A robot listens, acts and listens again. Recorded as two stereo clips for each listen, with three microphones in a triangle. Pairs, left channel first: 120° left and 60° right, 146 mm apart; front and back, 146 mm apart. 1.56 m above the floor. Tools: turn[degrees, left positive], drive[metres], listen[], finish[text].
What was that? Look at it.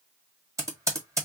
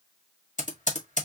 Thought: The typing on a keyboard: 10° left.
Action: turn[10]
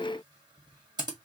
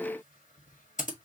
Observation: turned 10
Action: finish[Facing the typing on a keyboard.]